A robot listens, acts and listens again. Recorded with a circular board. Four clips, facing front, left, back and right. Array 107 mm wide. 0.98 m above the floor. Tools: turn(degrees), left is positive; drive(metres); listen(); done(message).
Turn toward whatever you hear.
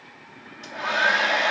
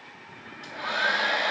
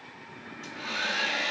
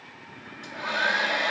turn(degrees=15)
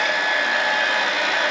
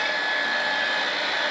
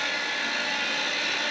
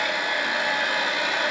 done("Facing the hair dryer, under 1 m away.")